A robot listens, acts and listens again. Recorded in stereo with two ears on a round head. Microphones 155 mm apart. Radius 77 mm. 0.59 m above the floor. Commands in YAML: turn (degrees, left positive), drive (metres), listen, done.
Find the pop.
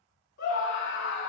listen: true
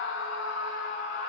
listen: true
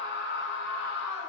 done: "I can't make out a pop to turn to."